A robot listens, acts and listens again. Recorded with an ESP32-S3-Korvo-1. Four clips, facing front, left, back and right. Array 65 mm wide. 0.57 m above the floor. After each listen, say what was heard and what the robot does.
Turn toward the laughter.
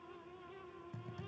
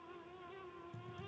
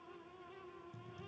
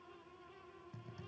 Keep listening.
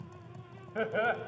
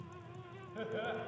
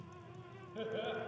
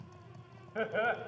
The laughter: 35° right. Turn 35° right.
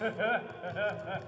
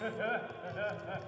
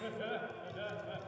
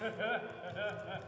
The laughter is now 15° left. Turn 15° left.
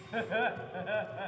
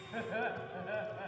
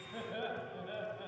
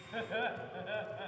The laughter is now 10° left. Turn 10° left.
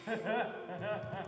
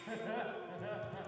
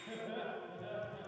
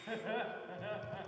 Facing the laughter.